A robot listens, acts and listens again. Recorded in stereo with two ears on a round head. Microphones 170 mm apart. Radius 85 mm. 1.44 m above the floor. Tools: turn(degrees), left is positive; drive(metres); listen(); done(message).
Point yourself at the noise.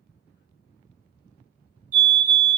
turn(degrees=-45)
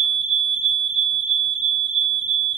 turn(degrees=-75)
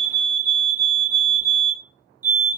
turn(degrees=-15)
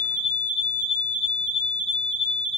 done("Found it: a fire alarm, straight ahead.")